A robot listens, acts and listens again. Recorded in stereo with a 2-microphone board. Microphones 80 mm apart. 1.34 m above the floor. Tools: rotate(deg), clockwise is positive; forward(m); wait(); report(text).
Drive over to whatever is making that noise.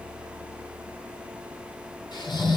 rotate(-65)
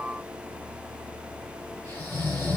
rotate(-35)
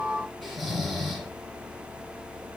forward(1.0)
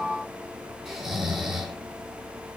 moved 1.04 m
rotate(10)
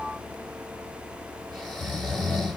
forward(1.0)
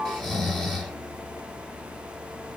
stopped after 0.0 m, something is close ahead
report("Arrived at the snoring, straight ahead.")